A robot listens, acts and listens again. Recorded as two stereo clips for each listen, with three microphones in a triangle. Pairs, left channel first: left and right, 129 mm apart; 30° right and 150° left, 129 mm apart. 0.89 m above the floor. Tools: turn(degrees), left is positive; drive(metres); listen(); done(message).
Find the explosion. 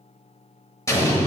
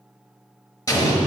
turn(degrees=25)
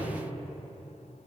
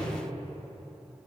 done("I heard an explosion from this way, but can't make it out now.")